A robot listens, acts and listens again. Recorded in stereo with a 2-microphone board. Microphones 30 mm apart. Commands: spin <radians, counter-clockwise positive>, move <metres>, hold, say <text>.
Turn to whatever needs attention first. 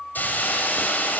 hold
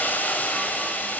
hold
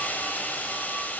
say I can't make out anything urgent, only a hiss.